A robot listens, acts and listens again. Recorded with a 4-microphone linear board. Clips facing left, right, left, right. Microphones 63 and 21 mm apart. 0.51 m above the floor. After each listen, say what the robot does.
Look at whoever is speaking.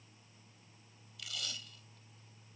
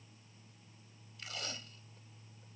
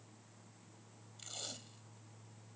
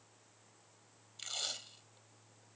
Keep listening.
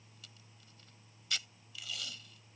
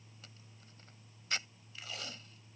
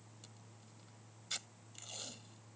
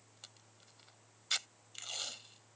Keep listening.
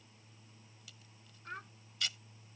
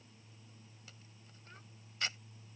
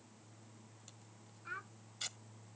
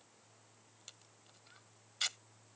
Turn 65° left.
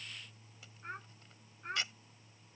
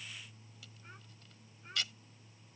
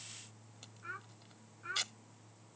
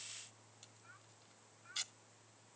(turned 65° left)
Turn 50° left.
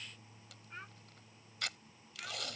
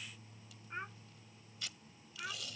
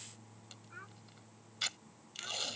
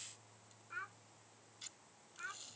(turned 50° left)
Turn 25° right.
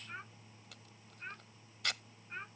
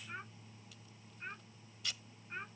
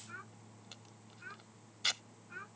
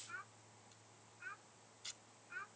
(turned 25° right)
Found it: a child speaking, straight ahead.